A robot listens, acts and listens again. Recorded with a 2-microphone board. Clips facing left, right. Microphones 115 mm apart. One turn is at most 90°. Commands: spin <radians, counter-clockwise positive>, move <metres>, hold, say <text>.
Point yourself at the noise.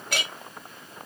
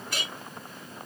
spin 1.57
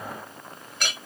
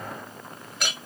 say Facing the clink.